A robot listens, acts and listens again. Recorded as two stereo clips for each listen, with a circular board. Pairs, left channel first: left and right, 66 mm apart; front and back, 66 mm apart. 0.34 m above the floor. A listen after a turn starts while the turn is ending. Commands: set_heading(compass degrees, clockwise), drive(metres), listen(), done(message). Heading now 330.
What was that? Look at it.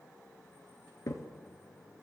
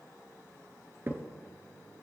set_heading(205)
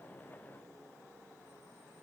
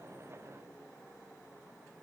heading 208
done("I heard a crack from this way, but can't make it out now.")